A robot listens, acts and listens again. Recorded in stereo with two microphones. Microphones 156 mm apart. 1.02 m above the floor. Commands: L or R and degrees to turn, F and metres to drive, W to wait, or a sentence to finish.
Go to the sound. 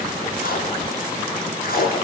L70
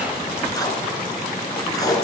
L25
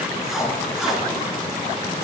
F1.0
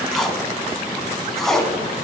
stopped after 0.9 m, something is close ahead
Arrived at the tape being pulled, straight ahead.